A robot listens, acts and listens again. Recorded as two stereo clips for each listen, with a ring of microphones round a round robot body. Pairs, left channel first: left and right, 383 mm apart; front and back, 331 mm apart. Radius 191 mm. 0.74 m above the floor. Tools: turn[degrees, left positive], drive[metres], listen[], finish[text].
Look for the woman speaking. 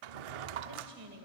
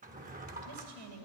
Thought: The woman speaking: 155° right.
Action: turn[-155]
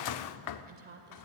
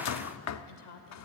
Thought: The woman speaking is now 25° right.
Action: turn[-25]
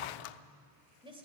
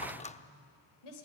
Thought: The woman speaking is now 15° right.
Action: turn[-15]
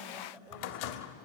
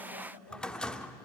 Action: finish[Found it: a woman speaking, straight ahead.]